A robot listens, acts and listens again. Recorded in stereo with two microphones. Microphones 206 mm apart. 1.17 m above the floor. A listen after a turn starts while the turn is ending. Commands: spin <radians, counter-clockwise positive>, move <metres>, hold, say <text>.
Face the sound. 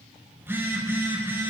spin -0.52
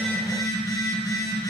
spin 0.35
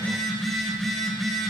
say Facing the phone buzzing, over 4 m away.